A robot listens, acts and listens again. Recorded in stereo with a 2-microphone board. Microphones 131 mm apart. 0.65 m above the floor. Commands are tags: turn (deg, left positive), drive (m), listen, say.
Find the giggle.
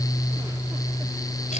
<listen/>
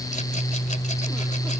<listen/>
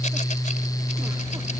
<say>I can't make out a giggle.</say>